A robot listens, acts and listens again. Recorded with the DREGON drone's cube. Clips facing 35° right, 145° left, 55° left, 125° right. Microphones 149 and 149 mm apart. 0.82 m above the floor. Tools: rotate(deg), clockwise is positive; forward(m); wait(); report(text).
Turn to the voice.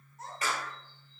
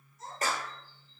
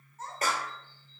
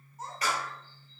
rotate(45)
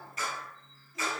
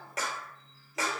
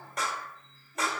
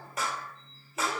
wait()
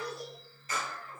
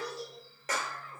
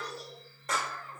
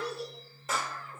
report("Facing the child speaking, 2 to 4 m away.")